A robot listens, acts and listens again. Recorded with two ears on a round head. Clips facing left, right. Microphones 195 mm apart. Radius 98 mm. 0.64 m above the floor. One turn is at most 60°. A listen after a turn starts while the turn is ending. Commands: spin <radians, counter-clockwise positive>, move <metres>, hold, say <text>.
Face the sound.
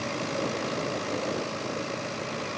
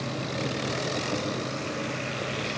hold
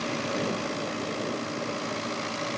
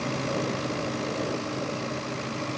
hold
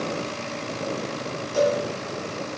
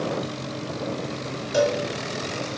spin -1.05
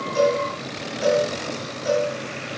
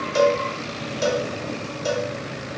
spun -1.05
spin -0.87
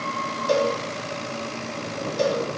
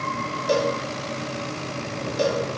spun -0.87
say Facing the cowbell, 2 to 4 m away.